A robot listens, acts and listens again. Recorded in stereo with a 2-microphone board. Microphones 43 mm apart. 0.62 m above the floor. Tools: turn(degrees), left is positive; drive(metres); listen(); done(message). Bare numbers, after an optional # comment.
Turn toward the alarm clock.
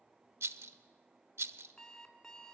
turn(30)
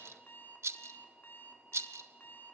# So it is at 135° left.
turn(135)
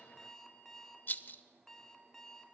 # The alarm clock is now 10° left.
turn(10)
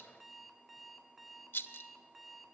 done("Facing the alarm clock.")